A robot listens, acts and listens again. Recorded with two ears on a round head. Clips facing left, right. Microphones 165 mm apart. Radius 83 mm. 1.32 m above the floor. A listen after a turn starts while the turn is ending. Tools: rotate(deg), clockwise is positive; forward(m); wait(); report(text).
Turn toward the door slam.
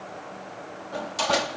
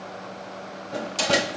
rotate(25)
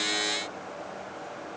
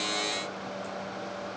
wait()
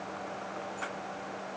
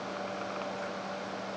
report("I heard a door slam, but can't make it out now. It was about straight ahead or 130° right.")